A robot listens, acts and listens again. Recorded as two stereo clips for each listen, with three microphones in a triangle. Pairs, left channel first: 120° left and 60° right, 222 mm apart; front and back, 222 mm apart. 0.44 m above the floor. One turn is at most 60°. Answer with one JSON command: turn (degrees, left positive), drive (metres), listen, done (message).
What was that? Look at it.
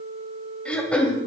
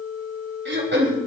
{"turn": -60}
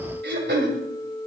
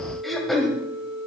{"turn": -60}
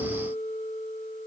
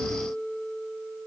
{"turn": -30}
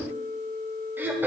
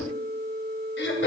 {"turn": 20}
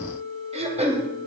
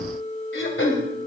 {"done": "Found it: throat clearing, straight ahead."}